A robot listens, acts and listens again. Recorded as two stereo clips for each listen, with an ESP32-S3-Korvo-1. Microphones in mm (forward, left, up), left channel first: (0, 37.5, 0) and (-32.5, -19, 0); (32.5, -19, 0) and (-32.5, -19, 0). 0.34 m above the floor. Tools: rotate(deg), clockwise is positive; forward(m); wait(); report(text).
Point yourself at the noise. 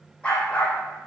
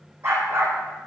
rotate(-135)
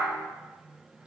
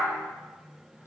wait()
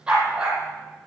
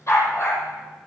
rotate(45)
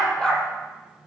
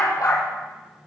rotate(20)
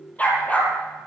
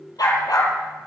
report("Found it: a dog barking, straight ahead, 2 to 4 m away.")